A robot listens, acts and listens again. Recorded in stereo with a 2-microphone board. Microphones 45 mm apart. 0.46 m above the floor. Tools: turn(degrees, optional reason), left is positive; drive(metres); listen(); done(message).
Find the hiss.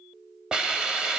turn(degrees=-15, reason="The hiss: about 15° right or 165° right.")
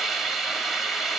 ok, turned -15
done("Found it: a hiss, straight ahead, 1 to 2 m away.")